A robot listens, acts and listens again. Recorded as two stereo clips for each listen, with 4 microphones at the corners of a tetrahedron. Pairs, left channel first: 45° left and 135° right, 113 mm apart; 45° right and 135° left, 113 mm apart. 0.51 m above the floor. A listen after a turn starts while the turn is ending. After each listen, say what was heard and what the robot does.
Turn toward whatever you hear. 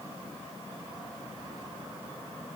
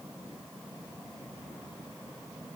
Keep listening.
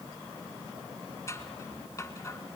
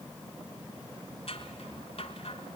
The scissors: 15° right. Turn 15° right.
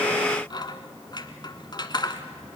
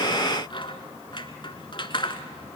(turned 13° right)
Found it: scissors, straight ahead.